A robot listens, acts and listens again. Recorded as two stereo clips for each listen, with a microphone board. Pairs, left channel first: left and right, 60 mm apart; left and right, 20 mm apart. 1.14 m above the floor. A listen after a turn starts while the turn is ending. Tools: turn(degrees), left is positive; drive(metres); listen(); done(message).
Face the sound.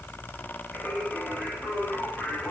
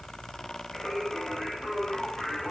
turn(degrees=30)
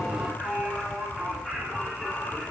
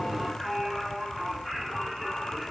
turn(degrees=30)
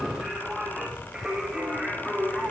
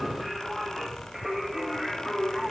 done("Facing the singing.")